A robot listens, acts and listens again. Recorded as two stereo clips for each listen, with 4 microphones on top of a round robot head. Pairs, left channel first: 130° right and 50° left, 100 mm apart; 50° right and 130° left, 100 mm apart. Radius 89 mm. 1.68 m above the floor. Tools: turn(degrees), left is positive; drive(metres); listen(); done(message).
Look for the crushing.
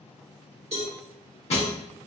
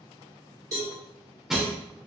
turn(degrees=-145)
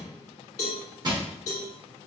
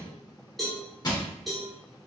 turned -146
done("Facing the crushing.")